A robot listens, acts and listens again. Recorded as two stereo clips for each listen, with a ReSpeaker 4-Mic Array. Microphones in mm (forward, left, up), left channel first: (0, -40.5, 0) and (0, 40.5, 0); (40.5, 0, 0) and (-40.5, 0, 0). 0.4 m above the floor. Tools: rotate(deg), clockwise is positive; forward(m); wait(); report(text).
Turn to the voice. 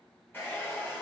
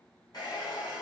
wait()
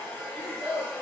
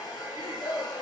rotate(-10)
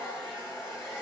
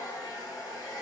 wait()
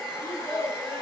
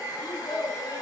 report("Facing the child speaking.")